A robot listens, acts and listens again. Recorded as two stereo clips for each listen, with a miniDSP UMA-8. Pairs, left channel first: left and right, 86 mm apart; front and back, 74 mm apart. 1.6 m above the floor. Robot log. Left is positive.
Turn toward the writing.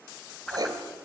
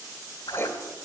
note: The writing: 55° right.
cmd yaw -55
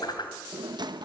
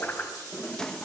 cmd idle
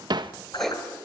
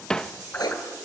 end: Found it: writing, straight ahead.